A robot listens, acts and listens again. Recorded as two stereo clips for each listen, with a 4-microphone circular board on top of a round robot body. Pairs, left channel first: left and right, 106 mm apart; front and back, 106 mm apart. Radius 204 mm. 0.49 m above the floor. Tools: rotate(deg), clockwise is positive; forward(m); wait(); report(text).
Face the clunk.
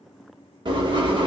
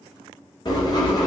wait()
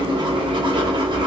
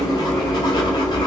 wait()
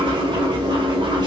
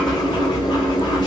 report("I can't make out a clunk, only writing.")